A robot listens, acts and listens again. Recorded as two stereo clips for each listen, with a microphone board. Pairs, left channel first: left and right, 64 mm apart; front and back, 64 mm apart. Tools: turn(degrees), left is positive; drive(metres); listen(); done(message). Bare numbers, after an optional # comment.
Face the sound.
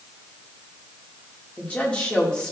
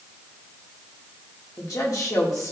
# The woman speaking: 15° left.
turn(15)
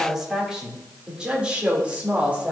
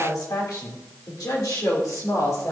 # The woman speaking is now 25° right.
turn(-25)
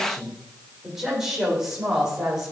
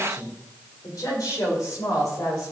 # The woman speaking is now 10° right.
turn(-10)
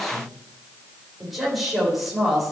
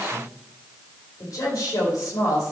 done("Found it: a woman speaking, straight ahead, over 4 m away.")